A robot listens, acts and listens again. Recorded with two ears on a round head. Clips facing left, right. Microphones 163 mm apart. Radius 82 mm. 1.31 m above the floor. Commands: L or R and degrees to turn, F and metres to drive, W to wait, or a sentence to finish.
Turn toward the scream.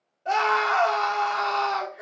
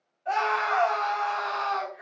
L55
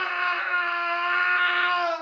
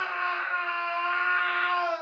L70
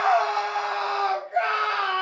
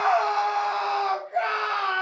Facing the scream, 1 to 2 m away.